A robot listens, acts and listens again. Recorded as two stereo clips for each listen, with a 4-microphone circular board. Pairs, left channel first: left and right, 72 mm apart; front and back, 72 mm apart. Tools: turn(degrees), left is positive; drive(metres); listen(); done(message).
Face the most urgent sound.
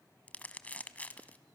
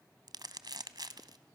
listen()
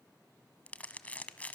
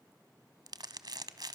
listen()
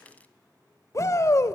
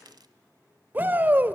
turn(degrees=120)
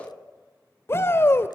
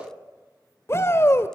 turn(degrees=45)
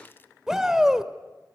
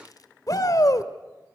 turn(degrees=-10)
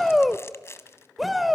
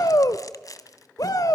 done("Found it: a shout, straight ahead.")